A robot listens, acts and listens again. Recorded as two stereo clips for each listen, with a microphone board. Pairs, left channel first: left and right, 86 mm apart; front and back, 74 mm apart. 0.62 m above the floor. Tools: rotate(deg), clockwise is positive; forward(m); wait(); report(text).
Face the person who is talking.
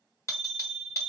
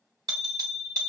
wait()
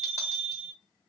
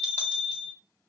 wait()
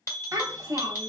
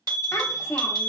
rotate(50)
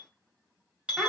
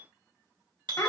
report("Found it: a child speaking, straight ahead.")